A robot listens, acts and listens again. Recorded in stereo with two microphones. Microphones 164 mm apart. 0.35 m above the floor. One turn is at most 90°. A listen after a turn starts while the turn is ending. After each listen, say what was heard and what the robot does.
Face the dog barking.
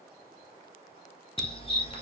The dog barking: about 35° left or 145° left. Turn 35° left.
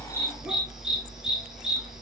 Found it: a dog barking, straight ahead, 2 to 4 m away.